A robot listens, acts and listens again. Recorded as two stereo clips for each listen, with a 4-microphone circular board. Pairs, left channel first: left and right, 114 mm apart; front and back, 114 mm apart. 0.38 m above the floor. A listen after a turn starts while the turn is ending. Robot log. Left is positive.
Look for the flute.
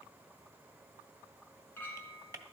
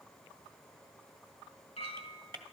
cmd idle
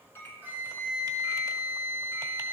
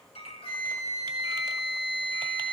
note: The flute: 25° right.
cmd yaw -25
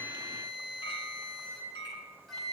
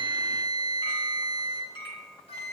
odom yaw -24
end: Facing the flute, 2 to 4 m away.